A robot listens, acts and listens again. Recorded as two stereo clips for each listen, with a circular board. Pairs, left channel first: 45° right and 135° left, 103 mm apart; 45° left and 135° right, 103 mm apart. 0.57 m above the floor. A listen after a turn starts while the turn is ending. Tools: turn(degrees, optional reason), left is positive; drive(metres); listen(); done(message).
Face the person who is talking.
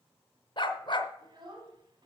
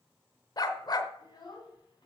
turn(degrees=90, reason="The child speaking: 90° left.")
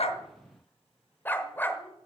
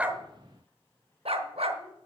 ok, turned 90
listen()
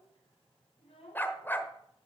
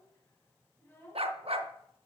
turn(degrees=-25, reason="The child speaking is now 25° right.")
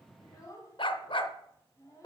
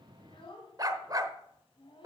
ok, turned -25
turn(degrees=10, reason="The child speaking is now 10° left.")
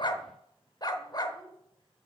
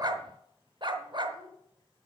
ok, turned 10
done("Facing the child speaking.")